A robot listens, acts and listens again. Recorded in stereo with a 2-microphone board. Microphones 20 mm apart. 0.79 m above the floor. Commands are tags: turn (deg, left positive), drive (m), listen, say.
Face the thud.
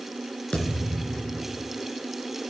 <turn deg="60"/>
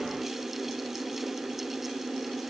<listen/>
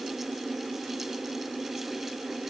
<say>I heard a thud, but can't make it out now. It was about straight ahead or 60° left.</say>